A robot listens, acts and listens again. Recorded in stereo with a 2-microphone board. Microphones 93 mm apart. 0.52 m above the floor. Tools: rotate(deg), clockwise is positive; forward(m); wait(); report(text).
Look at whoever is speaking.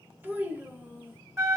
rotate(20)
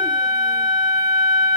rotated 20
wait()
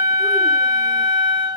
wait()
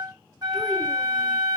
report("I heard a child speaking, but can't make it out now. It was about straight ahead or 140° right.")